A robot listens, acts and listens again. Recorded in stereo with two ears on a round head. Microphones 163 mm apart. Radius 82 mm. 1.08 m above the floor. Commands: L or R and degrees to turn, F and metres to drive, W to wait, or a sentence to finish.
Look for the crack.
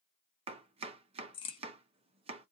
L30
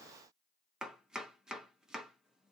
W
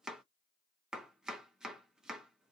I heard a crack, but can't make it out now. It was about straight ahead or 120° left.